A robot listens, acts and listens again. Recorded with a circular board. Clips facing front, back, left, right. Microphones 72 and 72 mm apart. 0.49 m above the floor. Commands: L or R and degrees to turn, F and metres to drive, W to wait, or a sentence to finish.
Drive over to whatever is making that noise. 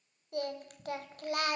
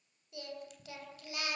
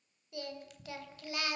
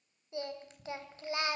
R30
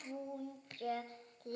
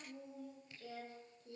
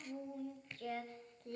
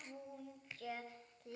F1.0
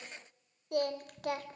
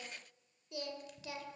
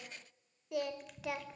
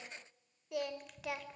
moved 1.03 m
F1.0
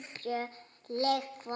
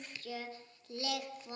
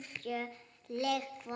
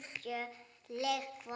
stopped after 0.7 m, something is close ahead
Arrived at the singing, straight ahead.